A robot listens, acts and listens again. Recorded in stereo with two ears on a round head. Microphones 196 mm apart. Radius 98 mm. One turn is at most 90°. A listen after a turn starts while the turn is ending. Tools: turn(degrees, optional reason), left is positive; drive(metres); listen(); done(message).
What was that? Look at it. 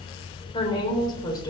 turn(degrees=20, reason="The woman speaking: about 20° left or 160° left.")
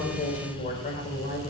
turn(degrees=30, reason="The woman speaking: about 30° left or 150° left.")
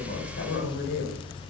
turn(degrees=90, reason="So it is at 125° left.")
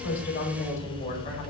turn(degrees=35, reason="The woman speaking is now 35° left.")
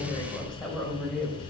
done("Facing the woman speaking.")